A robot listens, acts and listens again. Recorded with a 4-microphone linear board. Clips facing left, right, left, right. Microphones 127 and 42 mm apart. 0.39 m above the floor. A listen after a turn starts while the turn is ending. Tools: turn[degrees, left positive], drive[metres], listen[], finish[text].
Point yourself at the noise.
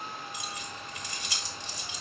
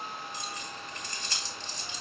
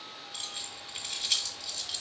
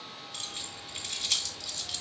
Action: turn[30]
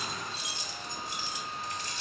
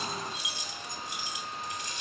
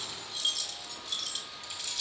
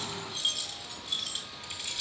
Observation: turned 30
Thought: So it is at 15° right.
Action: turn[-15]
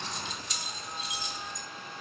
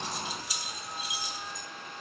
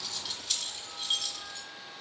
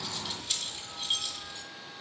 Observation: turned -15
Thought: The keys jangling is now 10° right.
Action: turn[-10]
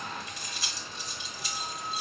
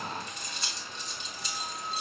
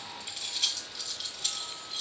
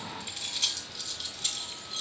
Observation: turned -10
Action: finish[Found it: keys jangling, straight ahead, 1 to 2 m away.]